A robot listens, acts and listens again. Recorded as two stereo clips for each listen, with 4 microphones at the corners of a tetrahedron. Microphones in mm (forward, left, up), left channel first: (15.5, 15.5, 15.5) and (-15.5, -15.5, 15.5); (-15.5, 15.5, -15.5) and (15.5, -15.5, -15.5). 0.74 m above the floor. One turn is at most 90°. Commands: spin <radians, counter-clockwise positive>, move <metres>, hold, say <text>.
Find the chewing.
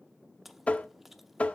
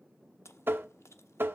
spin 1.57
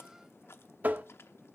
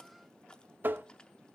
spin 1.13
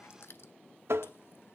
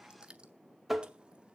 spin 0.44
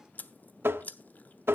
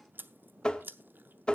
say Found it: chewing, straight ahead.